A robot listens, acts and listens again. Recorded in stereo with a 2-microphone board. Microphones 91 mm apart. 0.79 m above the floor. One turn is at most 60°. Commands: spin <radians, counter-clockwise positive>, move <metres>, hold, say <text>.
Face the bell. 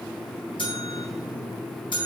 spin 1.05
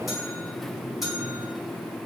say Facing the bell.